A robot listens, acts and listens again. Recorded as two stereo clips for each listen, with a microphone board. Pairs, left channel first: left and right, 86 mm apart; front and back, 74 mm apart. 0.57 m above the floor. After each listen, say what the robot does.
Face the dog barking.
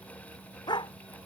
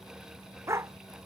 Turn 125° left.
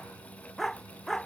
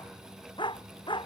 Found it: a dog barking, straight ahead.